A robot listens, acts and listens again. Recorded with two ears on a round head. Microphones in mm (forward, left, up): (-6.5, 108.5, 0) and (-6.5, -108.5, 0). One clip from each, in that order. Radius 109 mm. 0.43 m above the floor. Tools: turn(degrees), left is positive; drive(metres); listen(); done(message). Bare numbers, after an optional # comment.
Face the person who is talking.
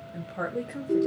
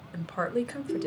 # The woman speaking: about 55° right or 125° right.
turn(-55)
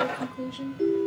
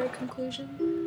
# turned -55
# So it is at 50° right.
turn(-50)
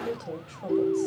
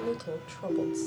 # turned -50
# The woman speaking is now 25° right.
turn(-25)
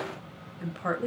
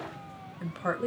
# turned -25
# The woman speaking is now 10° right.
turn(-10)
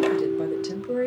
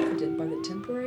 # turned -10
done("Facing the woman speaking, 2 to 4 m away.")